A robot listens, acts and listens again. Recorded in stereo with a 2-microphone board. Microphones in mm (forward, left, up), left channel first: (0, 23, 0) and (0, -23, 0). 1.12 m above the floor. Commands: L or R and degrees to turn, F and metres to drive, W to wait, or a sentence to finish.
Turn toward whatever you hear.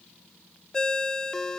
L30
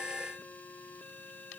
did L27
W
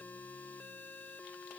W
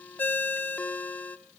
L140
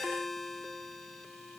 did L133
Facing the ringtone.